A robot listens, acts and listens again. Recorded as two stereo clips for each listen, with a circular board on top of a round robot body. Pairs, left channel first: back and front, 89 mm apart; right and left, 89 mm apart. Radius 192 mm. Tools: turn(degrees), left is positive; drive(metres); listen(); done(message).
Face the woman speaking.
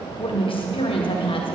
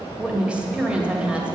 turn(degrees=170)
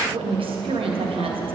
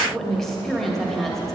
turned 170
done("Found it: a woman speaking, straight ahead, 2 to 4 m away.")